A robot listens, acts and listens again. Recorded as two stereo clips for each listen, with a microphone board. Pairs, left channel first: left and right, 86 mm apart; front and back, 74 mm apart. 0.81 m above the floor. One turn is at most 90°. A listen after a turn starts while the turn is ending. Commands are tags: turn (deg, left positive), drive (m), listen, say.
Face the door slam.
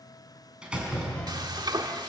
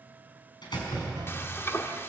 <turn deg="-10"/>
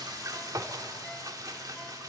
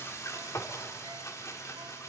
<say>Facing where the door slam came from. I can't hear it now.</say>